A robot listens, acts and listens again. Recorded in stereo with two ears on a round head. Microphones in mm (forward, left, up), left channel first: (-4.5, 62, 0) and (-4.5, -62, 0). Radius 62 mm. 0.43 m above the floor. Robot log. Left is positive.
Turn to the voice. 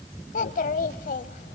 note: The child speaking: about 60° left or 120° left.
cmd yaw +60
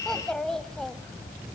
end: Facing the child speaking.